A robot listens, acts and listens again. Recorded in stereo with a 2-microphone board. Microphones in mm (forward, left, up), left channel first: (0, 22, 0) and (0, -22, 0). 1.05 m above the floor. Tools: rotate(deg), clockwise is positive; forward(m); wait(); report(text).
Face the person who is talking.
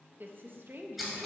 rotate(55)
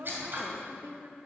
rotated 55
rotate(70)
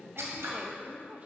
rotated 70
rotate(35)
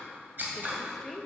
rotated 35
report("Facing the woman speaking, under 1 m away.")